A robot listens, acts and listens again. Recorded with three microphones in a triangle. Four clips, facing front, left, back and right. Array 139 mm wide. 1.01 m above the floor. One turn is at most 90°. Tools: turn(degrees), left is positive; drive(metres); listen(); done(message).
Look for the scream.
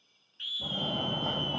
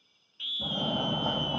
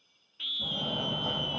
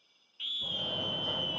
turn(degrees=90)
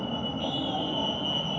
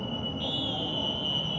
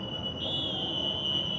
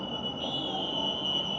turn(degrees=85)
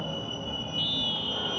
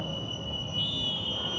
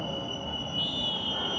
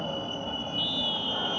listen()
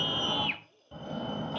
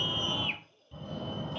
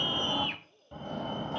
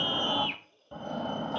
done("Facing the scream, 1 to 2 m away.")